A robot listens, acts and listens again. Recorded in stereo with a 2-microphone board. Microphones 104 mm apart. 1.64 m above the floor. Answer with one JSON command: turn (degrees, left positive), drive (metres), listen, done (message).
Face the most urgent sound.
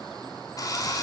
{"listen": true}
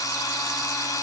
{"listen": true}
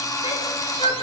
{"turn": 70}
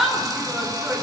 {"done": "Found it: a shout, straight ahead."}